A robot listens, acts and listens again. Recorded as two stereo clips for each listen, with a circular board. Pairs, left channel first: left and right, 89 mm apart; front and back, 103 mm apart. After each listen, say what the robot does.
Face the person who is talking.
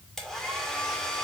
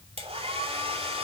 Keep listening.
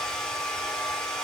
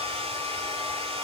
Keep listening.
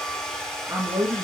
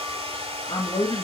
Turn 30° right.
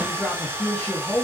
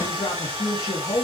Turn 25° left.
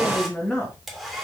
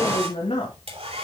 Turn 15° left.
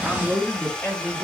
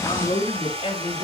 Turn 15° left.
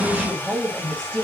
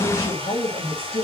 Found it: a man speaking, straight ahead, 2 to 4 m away.